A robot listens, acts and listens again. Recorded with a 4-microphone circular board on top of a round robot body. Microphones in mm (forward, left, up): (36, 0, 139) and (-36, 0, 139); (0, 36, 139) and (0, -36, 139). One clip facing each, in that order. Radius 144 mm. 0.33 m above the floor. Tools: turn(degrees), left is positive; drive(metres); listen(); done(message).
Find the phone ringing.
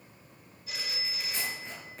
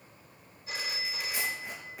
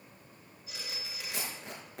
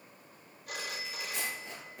turn(degrees=-120)
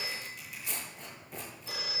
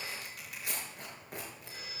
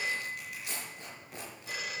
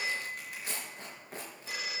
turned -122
done("Facing the phone ringing, 2 to 4 m away.")